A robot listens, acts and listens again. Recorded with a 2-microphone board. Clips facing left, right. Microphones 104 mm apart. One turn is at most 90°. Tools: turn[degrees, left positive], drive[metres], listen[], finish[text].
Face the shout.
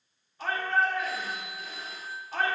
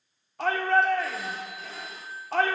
Thought: The shout: about 70° right or 110° right.
Action: turn[-70]
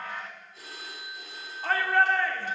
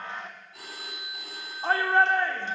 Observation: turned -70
Thought: So it is at 25° right.
Action: turn[-25]
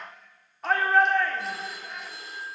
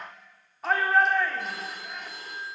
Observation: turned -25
Action: finish[Facing the shout, 1 to 2 m away.]